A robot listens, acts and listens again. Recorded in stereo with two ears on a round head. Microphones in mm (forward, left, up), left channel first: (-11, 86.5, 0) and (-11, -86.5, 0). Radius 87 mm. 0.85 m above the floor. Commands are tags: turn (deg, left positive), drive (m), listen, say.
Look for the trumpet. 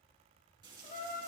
<turn deg="45"/>
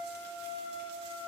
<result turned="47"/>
<turn deg="85"/>
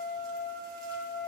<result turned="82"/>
<say>Facing the trumpet.</say>